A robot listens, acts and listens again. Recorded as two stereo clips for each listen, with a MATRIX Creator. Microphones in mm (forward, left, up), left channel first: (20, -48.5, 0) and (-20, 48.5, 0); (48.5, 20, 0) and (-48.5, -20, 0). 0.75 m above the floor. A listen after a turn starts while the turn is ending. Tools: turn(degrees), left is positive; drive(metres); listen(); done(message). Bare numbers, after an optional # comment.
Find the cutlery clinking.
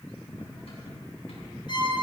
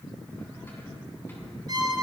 # The cutlery clinking: 45° right.
turn(-45)
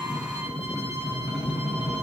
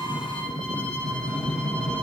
done("Found it: cutlery clinking, straight ahead.")